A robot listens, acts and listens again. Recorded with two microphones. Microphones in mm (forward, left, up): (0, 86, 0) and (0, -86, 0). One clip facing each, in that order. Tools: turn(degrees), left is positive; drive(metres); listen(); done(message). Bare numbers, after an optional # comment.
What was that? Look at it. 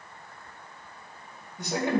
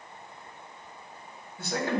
# The man speaking: about 20° left or 160° left.
turn(20)
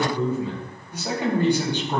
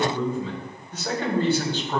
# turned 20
# The man speaking: about 20° left or 160° left.
turn(20)
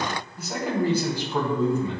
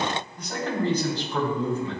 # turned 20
# The man speaking: about 15° left or 165° left.
turn(15)
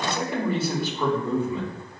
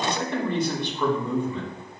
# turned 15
turn(30)
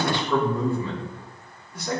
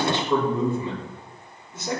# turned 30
# So it is at 25° right.
turn(-25)
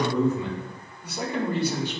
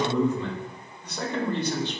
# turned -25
# The man speaking is now 10° left.
turn(10)
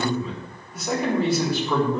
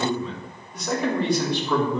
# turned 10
done("Facing the man speaking.")